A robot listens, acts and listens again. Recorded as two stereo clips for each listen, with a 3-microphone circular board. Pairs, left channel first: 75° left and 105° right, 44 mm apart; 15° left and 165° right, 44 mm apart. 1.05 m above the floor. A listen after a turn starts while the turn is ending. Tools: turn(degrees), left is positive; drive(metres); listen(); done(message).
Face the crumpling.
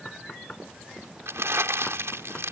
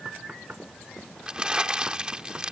turn(degrees=-95)
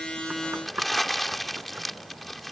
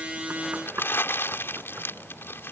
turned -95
turn(degrees=-15)
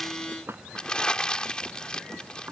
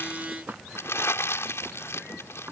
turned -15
done("Facing the crumpling.")